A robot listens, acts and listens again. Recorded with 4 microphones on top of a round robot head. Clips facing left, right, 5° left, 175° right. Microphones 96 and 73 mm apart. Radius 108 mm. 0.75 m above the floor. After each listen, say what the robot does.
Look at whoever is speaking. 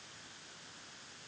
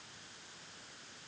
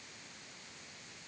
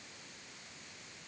Keep listening.
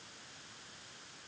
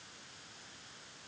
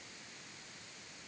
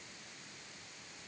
Keep listening.
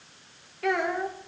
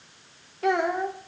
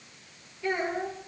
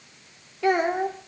Turn 160° right.
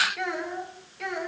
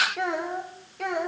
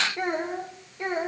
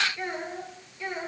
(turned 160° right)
Turn 50° right.
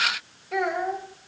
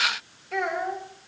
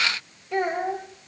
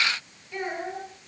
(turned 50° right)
Found it: a child speaking, straight ahead, 2 to 4 m away.